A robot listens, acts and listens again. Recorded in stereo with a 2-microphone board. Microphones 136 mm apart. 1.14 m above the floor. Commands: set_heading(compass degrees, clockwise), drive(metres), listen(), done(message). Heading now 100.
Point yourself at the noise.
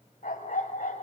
set_heading(30)
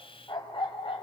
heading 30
set_heading(350)
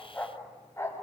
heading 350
set_heading(330)
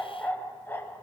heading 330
set_heading(315)
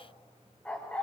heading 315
set_heading(305)
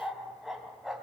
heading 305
done("Facing the dog barking, 2 to 4 m away.")